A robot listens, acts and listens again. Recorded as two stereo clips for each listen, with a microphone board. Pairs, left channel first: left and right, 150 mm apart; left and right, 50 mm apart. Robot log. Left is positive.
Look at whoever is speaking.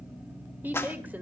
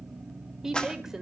cmd yaw -30
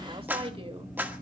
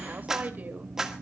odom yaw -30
note: So it is at 145° right.
cmd yaw -145
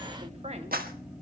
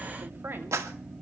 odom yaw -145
cmd idle
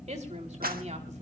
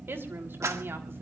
note: The woman speaking is now 50° right.
cmd yaw -50
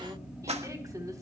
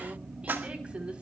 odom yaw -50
note: The woman speaking is now 20° right.
cmd yaw -20
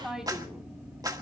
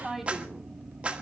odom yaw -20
end: Found it: a woman speaking, straight ahead, 2 to 4 m away.